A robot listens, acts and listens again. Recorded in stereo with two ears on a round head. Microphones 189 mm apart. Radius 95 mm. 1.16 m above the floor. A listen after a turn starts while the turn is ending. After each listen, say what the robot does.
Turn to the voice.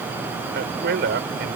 Turn 55° right.
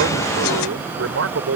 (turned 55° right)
Turn 70° right.
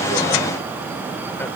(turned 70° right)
Keep listening.
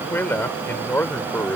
Turn 10° left.
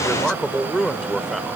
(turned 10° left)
Found it: a man speaking, straight ahead.